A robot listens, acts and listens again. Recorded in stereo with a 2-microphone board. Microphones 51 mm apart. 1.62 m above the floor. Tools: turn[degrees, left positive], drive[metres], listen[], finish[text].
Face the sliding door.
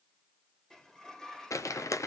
Action: turn[30]
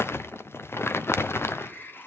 Thought: So it is at 135° left.
Action: turn[135]
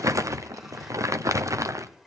Action: finish[Facing the sliding door.]